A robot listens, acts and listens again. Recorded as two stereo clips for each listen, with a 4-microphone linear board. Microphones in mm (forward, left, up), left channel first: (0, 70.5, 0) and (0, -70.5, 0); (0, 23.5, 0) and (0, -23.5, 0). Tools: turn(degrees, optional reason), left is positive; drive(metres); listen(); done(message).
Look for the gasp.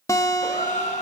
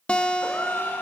turn(degrees=60, reason="The gasp: about 60° left or 120° left.")
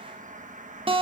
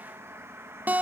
listen()
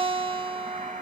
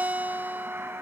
done("I heard a gasp, but can't make it out now. It was about straight ahead or 60° left.")